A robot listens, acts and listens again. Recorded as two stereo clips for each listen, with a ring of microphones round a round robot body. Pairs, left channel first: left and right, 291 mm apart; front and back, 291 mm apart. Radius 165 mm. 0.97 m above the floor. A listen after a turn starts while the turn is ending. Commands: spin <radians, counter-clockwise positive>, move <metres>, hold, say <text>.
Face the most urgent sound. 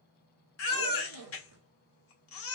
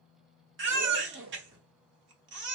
spin 2.27
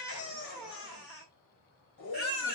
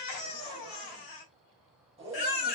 say Facing the baby crying, 1 to 2 m away.